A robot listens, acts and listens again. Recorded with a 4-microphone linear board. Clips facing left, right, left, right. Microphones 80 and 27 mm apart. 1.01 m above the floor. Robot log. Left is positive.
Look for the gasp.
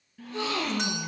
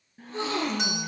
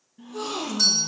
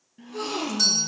note: The gasp: about 30° right or 150° right.
cmd yaw -30
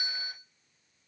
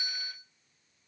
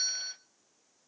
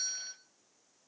cmd idle
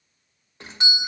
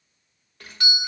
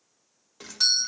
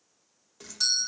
end: I heard a gasp, but can't make it out now. It was about straight ahead or 120° right.